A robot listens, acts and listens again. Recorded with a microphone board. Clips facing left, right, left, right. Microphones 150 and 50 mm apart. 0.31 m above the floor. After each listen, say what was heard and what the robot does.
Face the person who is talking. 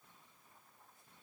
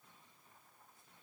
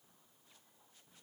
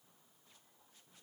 Keep listening.
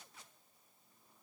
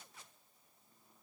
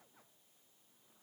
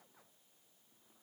Keep listening.
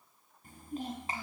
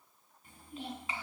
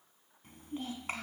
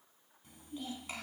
The child speaking: about 45° left or 135° left. Turn 45° left.
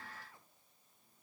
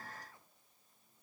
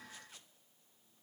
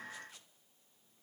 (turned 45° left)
Keep listening.
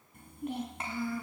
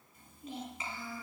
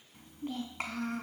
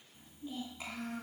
So it is at 90° left. Turn 90° left.
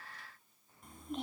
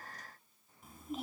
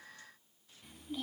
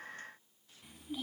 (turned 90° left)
Facing the child speaking.